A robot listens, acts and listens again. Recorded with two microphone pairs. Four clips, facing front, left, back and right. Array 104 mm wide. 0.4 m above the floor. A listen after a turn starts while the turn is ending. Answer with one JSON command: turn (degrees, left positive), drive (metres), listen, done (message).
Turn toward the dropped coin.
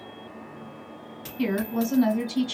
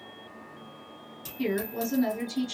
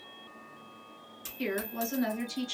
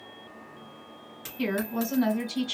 {"turn": -75}
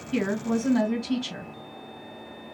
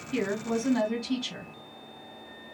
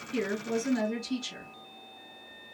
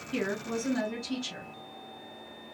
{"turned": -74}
{"done": "I heard a dropped coin from this way, but can't make it out now."}